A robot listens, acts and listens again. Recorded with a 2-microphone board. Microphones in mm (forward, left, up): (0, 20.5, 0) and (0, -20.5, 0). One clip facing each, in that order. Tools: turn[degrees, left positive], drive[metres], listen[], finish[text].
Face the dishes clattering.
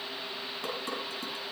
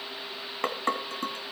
Thought: The dishes clattering: about 55° right or 125° right.
Action: turn[-55]
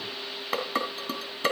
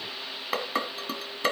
Action: finish[Found it: dishes clattering, straight ahead, 2 to 4 m away.]